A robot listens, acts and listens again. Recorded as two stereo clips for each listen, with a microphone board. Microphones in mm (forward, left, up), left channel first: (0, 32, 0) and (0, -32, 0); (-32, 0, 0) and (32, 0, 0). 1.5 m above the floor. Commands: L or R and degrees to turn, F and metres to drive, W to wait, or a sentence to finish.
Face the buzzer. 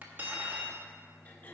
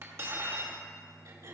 W
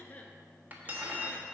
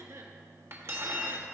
W
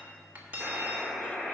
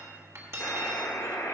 R165
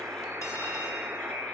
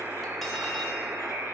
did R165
R40
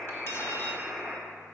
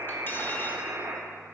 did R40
Found it: a buzzer, straight ahead, 1 to 2 m away.